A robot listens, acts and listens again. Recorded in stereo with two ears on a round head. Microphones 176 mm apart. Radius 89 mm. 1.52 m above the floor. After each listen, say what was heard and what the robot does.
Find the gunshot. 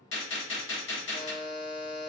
The gunshot: about 70° left or 110° left. Turn 70° left.
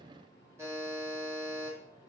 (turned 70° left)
Keep listening.
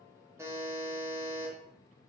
I heard a gunshot, but can't make it out now. It was about straight ahead or 40° left.